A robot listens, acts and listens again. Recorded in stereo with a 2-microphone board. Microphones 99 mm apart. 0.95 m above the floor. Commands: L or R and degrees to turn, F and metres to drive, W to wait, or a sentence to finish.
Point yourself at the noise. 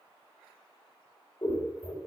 L50
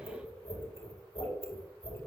L85
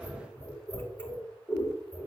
L20
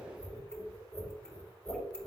Facing the scissors.